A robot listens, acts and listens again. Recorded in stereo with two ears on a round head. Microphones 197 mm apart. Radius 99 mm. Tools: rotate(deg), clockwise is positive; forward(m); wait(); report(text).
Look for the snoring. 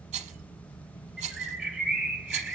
wait()
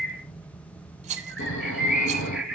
rotate(-55)
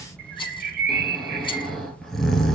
report("Facing the snoring, 1 to 2 m away.")